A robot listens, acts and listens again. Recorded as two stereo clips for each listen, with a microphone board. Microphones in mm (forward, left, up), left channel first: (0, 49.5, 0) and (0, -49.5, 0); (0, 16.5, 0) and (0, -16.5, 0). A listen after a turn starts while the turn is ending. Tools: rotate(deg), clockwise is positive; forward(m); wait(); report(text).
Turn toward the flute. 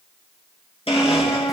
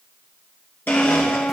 rotate(-50)
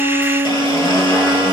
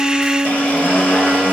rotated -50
report("Facing the flute, 2 to 4 m away.")